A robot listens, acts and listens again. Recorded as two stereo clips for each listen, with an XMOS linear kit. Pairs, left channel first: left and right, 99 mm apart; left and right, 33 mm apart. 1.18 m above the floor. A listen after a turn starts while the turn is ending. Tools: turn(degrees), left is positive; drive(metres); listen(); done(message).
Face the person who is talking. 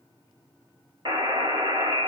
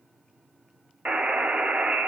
listen()
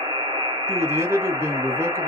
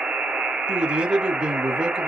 turn(degrees=-25)
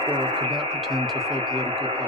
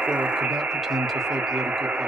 done("Facing the man speaking.")